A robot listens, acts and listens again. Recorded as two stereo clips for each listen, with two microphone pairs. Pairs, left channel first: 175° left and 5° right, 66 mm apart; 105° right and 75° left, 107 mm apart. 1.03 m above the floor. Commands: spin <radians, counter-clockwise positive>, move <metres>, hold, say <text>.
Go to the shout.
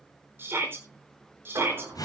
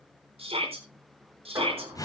spin 0.87
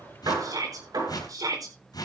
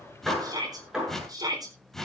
spin 0.35
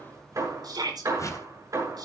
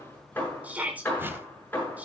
move 1.0
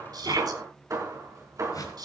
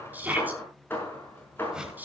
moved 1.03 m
move 1.0
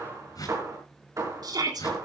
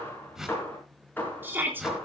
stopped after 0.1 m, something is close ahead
say Something is in my way. I am facing the shout but have not reached it.